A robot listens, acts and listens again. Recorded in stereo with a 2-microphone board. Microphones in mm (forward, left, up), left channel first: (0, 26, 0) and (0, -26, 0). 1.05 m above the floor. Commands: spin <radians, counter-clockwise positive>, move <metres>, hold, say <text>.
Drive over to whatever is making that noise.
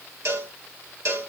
spin -1.05
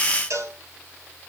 spin -1.05
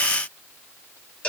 spin 0.52
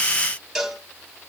move 1.0
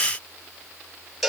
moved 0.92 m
move 1.0
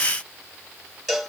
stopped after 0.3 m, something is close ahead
say Something is in my way. I am facing the cowbell but have not reached it.